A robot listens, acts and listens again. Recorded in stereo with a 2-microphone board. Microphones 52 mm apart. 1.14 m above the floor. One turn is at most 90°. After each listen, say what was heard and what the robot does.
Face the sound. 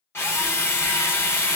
The drill: about 50° left or 130° left. Turn 50° left.
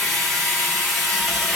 Facing the drill.